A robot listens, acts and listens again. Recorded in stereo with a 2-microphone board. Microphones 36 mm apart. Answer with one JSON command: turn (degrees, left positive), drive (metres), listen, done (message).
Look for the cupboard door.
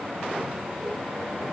{"listen": true}
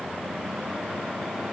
{"listen": true}
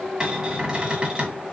{"turn": -20}
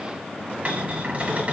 {"turn": -135}
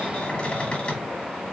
{"turn": 30}
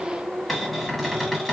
{"done": "Facing the cupboard door, 1 to 2 m away."}